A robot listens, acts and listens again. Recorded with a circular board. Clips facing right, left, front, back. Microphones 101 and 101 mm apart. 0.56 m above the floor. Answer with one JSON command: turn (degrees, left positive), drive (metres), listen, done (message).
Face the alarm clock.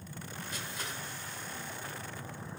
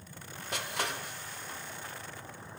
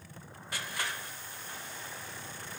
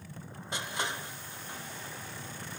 {"listen": true}
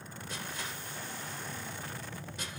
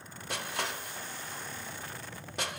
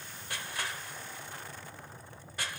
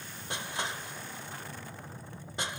{"listen": true}
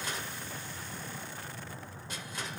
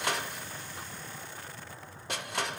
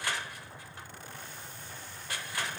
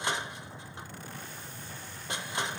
{"done": "I can't make out an alarm clock, only crushing."}